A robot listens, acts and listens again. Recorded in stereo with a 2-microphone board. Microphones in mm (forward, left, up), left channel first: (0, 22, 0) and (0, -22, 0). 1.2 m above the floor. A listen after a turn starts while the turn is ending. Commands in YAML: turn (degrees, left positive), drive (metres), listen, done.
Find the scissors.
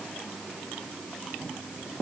listen: true
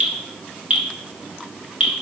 listen: true
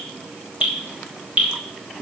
done: "I can't make out scissors, only dripping."